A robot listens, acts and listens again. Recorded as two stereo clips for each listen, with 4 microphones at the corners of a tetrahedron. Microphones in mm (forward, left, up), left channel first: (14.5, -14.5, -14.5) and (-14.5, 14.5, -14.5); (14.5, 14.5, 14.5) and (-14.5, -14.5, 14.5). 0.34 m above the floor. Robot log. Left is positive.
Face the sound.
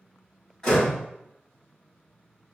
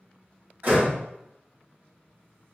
note: The door slam: 115° right.
cmd yaw -115
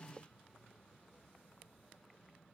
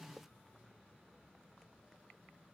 end: Facing where the door slam came from. I can't hear it now.